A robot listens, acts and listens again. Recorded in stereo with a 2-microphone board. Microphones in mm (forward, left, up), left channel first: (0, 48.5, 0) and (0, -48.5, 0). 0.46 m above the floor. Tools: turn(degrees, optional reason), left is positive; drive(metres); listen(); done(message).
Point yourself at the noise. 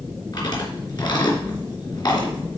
turn(degrees=50, reason="The chewing: about 50° left or 130° left.")
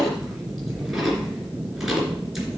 listen()
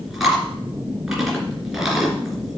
done("Found it: chewing, straight ahead, 2 to 4 m away.")